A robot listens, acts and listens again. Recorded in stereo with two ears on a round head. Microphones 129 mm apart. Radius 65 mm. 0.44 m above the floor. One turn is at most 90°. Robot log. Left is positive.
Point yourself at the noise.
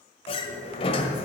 note: The sliding door: about 40° left or 140° left.
cmd yaw +40
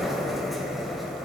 end: Found it: a sliding door, straight ahead, 1 to 2 m away.